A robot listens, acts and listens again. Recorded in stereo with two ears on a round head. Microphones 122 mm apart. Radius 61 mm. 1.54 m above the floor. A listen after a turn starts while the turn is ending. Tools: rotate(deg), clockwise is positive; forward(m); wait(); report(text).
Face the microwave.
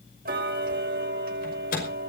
rotate(-65)
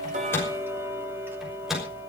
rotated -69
report("Facing the microwave.")